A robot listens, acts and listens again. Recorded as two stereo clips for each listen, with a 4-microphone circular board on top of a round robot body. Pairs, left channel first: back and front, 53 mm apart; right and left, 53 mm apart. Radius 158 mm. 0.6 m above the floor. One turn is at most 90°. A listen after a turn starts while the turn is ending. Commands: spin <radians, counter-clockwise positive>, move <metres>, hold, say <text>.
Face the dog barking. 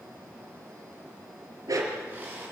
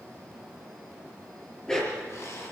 spin -0.26
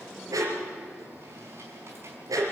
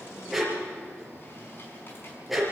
say Facing the dog barking.